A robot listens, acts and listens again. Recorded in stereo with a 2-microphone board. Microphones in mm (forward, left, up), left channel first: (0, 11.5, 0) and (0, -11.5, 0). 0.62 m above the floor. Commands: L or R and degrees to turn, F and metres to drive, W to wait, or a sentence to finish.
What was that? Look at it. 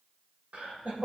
R65
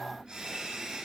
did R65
R40
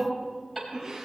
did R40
Found it: laughter, straight ahead, over 4 m away.